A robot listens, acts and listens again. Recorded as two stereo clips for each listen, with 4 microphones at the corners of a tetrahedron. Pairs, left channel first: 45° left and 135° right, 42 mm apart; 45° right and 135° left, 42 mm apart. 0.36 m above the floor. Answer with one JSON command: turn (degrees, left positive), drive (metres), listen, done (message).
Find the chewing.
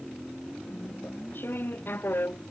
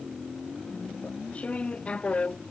{"turn": 15}
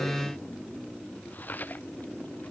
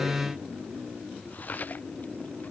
{"done": "Facing the chewing."}